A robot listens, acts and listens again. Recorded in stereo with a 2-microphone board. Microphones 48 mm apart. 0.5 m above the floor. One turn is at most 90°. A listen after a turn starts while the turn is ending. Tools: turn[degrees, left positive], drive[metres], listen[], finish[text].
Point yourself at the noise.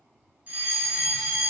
Thought: The fire alarm: about 35° right or 145° right.
Action: turn[-35]
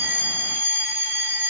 Thought: So it is at 110° right.
Action: turn[-90]
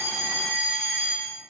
Thought: The fire alarm is now 40° right.
Action: turn[-40]
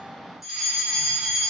Action: finish[Found it: a fire alarm, straight ahead.]